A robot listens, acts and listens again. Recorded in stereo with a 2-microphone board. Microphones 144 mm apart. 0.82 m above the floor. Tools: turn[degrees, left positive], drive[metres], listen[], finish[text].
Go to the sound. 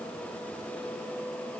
Action: listen[]
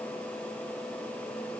Action: listen[]
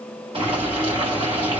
Thought: The boiling: about 40° right or 140° right.
Action: turn[-40]
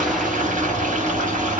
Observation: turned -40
Thought: So it is at 95° right.
Action: turn[-95]
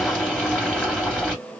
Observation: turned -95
Action: drive[1.0]
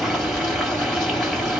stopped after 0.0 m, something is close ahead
Action: finish[Blocked. The boiling is further on, straight ahead.]